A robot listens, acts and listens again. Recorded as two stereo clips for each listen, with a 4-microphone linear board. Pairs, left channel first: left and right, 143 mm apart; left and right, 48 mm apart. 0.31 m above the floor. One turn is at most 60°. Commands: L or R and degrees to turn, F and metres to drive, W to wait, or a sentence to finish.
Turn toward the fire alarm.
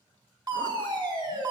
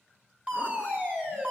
R30
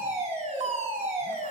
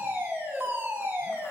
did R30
R60
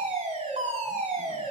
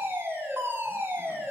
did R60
R55
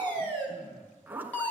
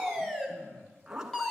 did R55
L15
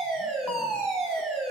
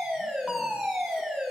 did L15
Found it: a fire alarm, straight ahead.